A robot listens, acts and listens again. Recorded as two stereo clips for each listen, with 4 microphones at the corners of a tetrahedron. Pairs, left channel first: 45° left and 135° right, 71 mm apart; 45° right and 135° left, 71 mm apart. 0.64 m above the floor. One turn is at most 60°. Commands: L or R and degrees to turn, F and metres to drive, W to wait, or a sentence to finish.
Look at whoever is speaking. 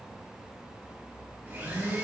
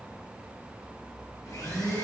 W
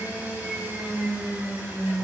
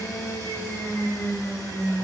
W
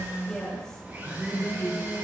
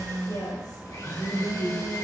R30
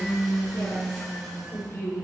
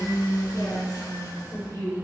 Found it: a woman speaking, straight ahead, 2 to 4 m away.